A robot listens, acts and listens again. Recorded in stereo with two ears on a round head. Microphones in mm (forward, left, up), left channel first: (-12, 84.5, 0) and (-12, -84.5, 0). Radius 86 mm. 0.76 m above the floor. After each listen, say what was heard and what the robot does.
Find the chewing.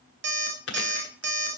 The chewing: about 65° left or 115° left. Turn 65° left.
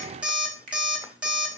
Keep listening.
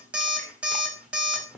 Found it: chewing, straight ahead, 1 to 2 m away.